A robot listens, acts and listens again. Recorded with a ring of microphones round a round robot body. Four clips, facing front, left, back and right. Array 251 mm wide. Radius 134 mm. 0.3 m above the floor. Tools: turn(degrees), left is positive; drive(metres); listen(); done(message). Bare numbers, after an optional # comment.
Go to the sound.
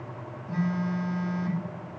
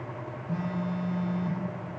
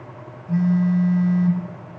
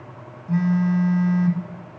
# The phone buzzing: 100° right.
turn(-100)
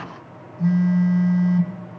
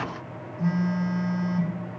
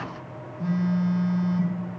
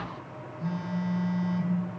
# The phone buzzing is now 50° left.
turn(50)
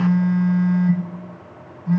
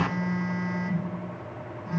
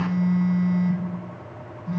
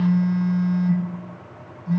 # The phone buzzing is now 10° left.
turn(10)
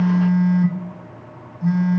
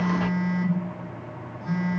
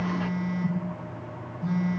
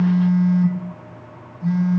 drive(1.0)
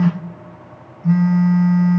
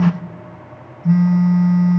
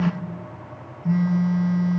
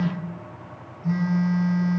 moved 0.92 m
# The phone buzzing is now 10° left.
turn(10)
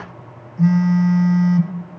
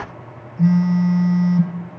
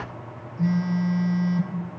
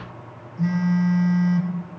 drive(1.0)
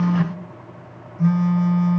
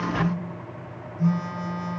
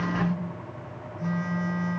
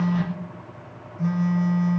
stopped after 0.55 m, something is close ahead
done("I am next to the phone buzzing.")